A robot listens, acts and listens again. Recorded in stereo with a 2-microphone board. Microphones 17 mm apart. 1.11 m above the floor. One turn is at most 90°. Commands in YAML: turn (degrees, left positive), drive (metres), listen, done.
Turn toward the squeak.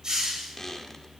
turn: 30
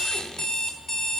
listen: true
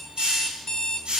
listen: true
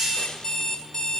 done: "I heard a squeak, but can't make it out now. It was about straight ahead or 120° left."